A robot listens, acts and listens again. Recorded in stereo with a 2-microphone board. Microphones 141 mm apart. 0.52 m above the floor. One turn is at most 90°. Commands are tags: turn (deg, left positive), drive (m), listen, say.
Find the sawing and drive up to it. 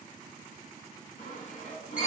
<turn deg="55"/>
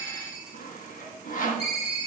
<turn deg="70"/>
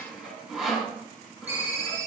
<drive m="1.0"/>
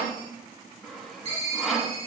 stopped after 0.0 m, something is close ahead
<say>Blocked. The sawing is further on, straight ahead.</say>